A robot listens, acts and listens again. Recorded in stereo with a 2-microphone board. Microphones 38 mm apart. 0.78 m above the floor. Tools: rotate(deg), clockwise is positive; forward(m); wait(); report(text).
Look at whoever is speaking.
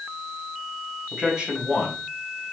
rotate(20)
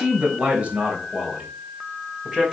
rotate(15)
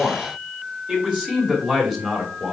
rotate(30)
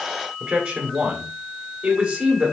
rotate(140)
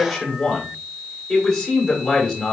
rotate(-25)
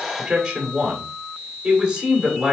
rotate(15)
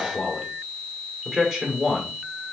report("Facing the man speaking, 2 to 4 m away.")